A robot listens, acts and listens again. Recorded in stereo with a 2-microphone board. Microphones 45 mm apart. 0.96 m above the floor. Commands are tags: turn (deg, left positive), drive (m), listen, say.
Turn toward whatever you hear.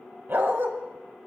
<turn deg="-60"/>
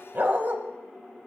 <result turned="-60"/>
<turn deg="-55"/>
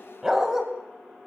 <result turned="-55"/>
<turn deg="-15"/>
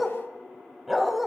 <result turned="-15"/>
<say>Facing the dog barking.</say>